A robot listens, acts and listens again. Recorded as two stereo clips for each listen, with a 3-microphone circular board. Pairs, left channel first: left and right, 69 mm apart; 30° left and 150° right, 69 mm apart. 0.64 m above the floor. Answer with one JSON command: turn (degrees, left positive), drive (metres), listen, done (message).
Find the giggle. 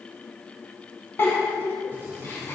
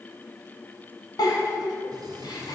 {"turn": 35}
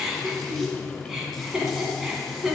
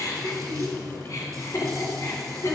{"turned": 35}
{"done": "Facing the giggle, 1 to 2 m away."}